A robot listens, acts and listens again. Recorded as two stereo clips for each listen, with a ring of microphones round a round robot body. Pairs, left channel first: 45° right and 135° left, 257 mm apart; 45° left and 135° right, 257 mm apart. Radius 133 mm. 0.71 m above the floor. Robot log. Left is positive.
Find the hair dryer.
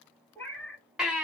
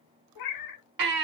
cmd idle
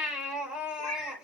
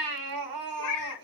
cmd idle
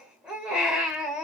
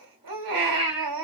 end: I can't make out a hair dryer to turn to.